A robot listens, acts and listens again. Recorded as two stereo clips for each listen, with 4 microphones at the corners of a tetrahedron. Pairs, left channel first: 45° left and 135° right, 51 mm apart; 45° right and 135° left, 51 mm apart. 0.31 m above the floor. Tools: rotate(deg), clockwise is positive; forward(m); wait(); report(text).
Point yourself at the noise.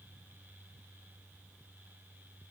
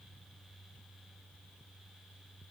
wait()
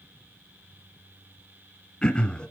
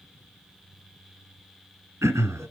rotate(-115)
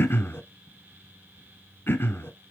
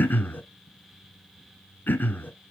report("Facing the throat clearing, 1 to 2 m away.")